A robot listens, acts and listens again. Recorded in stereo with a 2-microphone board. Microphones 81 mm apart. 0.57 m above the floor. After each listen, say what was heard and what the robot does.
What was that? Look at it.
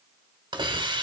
The hiss: about 75° right or 105° right. Turn 75° right.
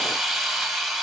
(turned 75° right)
Facing the hiss.